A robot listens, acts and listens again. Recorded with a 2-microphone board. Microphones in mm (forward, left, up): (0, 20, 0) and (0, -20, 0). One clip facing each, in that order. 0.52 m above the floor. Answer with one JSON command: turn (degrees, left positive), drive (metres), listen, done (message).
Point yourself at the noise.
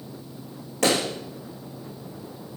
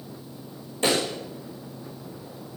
{"turn": 70}
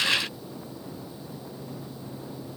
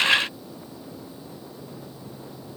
{"listen": true}
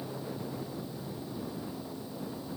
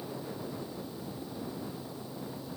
{"done": "I heard a pop, but can't make it out now. It was about straight ahead or 40° left."}